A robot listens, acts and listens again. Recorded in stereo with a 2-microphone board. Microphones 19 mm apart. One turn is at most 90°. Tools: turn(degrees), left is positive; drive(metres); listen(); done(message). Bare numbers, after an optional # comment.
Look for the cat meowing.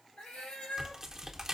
turn(90)
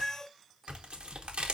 done("Found it: a cat meowing, straight ahead.")